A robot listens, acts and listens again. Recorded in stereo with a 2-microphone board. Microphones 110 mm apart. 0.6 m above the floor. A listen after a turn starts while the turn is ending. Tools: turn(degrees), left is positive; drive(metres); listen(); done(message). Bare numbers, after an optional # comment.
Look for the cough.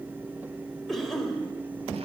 turn(30)
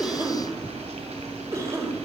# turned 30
# So it is at 30° right.
turn(-30)
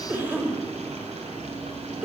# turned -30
# The cough is now 20° right.
turn(-20)
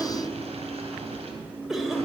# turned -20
done("Facing the cough.")